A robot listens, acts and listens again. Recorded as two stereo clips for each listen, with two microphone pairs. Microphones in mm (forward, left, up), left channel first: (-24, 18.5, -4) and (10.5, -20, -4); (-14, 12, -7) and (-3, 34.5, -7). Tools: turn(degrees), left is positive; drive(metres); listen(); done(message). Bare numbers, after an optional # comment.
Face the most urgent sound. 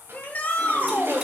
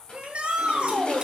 # The shout: 80° left.
turn(80)
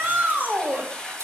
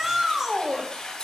done("Found it: a shout, straight ahead, 1 to 2 m away.")